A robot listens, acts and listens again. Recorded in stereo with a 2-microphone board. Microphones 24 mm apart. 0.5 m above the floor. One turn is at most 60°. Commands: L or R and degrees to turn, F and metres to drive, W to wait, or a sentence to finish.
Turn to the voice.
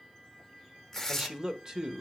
R30
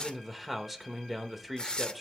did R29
Found it: a man speaking, straight ahead, 1 to 2 m away.